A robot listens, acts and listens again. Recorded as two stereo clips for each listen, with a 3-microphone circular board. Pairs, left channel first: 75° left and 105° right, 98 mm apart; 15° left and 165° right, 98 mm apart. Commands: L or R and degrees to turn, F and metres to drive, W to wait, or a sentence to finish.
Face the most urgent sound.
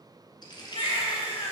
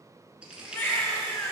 L85
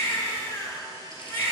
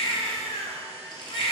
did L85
L10
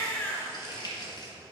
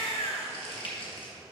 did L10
Facing the baby crying.